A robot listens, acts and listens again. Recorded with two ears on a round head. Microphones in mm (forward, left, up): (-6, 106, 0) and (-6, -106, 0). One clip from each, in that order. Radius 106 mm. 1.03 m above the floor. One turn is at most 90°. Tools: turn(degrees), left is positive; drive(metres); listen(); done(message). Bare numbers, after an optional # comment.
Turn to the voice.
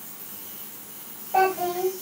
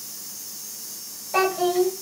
# The child speaking: about 75° right or 105° right.
turn(-75)
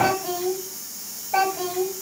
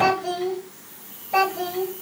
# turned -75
# So it is at 35° right.
turn(-35)
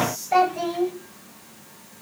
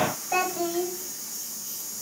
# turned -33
done("Facing the child speaking.")